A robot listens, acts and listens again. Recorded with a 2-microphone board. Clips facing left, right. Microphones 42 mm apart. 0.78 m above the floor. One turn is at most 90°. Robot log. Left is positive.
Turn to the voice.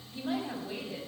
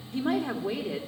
note: The woman speaking: about 65° right or 115° right.
cmd yaw -65
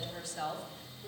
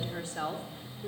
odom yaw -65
note: So it is at 40° right.
cmd yaw -40
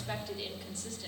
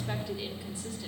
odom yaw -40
note: The woman speaking is now 10° right.
cmd yaw -10
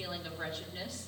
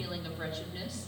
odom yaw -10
end: Facing the woman speaking, 2 to 4 m away.